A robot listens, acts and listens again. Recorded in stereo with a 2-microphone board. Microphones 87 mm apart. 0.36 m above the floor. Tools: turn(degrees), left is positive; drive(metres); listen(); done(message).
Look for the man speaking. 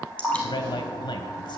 turn(degrees=60)
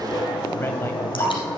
listen()
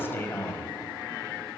turn(degrees=30)
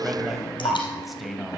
done("Found it: a man speaking, straight ahead, 1 to 2 m away.")